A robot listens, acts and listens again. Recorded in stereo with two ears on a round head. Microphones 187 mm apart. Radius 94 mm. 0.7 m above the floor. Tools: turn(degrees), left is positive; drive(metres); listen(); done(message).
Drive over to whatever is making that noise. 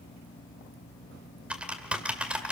turn(degrees=-30)
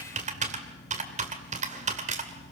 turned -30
turn(degrees=-140)
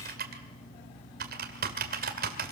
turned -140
turn(degrees=-45)
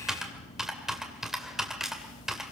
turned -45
drive(metres=1.0)
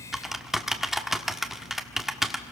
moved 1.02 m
drive(metres=1.0)
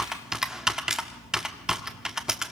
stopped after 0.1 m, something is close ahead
done("Arrived at the typing on a keyboard, straight ahead.")